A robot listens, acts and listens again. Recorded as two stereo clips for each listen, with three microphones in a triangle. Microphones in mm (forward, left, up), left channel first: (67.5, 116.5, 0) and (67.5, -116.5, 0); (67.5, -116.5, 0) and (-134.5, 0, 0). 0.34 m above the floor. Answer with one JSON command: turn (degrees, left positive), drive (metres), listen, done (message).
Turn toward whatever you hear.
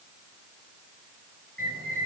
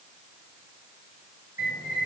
{"turn": -135}
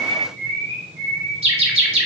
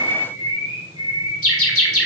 {"turn": -25}
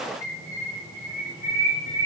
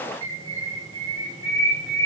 {"turn": -10}
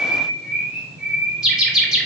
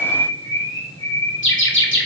{"done": "Facing the bird, 1 to 2 m away."}